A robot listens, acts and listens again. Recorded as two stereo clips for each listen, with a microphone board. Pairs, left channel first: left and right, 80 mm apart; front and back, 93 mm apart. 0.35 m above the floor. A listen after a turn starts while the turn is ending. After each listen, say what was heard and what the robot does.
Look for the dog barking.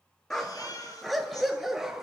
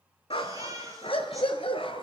Found it: a dog barking, straight ahead, 2 to 4 m away.